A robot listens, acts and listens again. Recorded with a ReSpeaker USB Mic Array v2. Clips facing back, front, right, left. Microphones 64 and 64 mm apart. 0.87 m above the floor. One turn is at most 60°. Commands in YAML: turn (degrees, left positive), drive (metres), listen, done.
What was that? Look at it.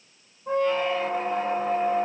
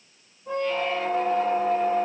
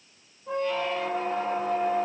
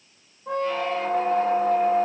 turn: 60
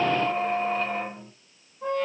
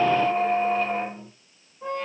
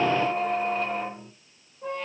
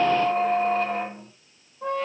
turn: 60
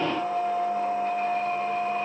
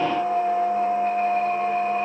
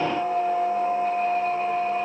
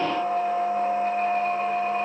turn: 55
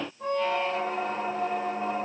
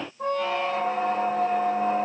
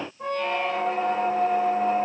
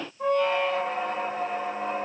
done: "Found it: a squeak, straight ahead."